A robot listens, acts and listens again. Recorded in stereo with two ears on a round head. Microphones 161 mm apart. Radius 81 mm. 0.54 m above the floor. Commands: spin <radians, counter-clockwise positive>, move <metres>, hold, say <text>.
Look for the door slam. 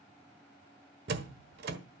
spin -1.05
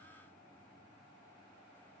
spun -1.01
hold
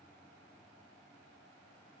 say I heard a door slam, but can't make it out now. It was about 5° right or 60° right.